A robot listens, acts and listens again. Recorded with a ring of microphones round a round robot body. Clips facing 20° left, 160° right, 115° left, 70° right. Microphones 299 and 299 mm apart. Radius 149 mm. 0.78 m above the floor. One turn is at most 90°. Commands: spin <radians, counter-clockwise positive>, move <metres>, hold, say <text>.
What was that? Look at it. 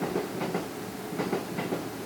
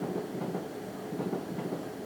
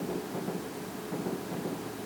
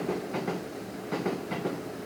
hold
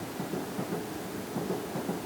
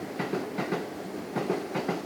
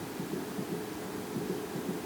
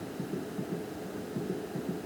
hold
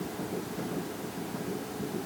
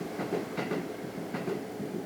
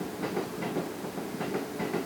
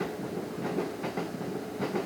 say I can't make out anything to turn to.